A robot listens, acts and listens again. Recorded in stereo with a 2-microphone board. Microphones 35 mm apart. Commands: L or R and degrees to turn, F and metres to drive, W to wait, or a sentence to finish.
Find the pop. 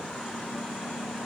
W
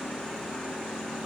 W
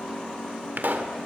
R75
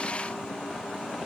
W
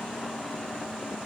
I heard a pop, but can't make it out now. It was about straight ahead or 30° right.